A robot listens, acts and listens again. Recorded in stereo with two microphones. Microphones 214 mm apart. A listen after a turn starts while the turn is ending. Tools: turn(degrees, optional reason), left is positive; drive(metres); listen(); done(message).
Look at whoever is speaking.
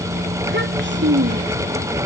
turn(degrees=-65, reason="The child speaking: about 65° right or 115° right.")
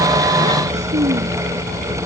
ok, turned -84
turn(degrees=-35, reason="So it is at 35° right.")
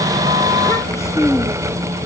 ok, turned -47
turn(degrees=15, reason="The child speaking is now 15° left.")
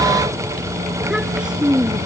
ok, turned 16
done("Found it: a child speaking, straight ahead.")